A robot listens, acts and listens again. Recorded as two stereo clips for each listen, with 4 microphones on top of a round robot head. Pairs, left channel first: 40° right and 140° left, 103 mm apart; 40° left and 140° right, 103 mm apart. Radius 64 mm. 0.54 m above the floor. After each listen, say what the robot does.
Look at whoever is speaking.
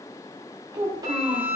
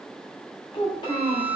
Turn 85° left.
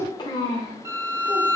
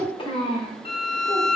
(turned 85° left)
Found it: a child speaking, straight ahead.